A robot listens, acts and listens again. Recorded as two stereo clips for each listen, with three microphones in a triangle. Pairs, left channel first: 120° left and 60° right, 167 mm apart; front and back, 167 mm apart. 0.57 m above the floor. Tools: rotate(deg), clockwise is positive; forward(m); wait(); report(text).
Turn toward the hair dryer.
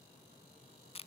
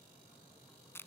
wait()
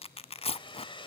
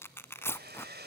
rotate(-180)
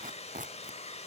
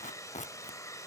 rotate(-70)
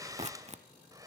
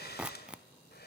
rotate(-10)
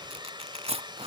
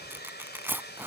report("Facing the hair dryer, 2 to 4 m away.")